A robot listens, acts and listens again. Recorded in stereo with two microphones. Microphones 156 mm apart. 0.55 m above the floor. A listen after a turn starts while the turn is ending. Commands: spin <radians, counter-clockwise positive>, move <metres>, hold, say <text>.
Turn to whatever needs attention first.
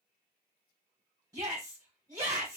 spin -0.35
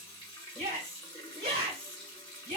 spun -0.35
spin -2.36
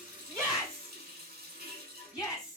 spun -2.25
say Found it: a shout, straight ahead.